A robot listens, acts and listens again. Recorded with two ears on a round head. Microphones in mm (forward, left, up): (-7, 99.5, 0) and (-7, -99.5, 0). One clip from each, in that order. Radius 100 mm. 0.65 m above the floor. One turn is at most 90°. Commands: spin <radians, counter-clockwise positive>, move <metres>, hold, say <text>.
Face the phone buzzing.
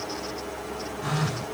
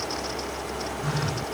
spin 0.26
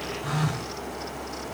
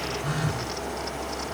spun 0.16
say Found it: a phone buzzing, straight ahead.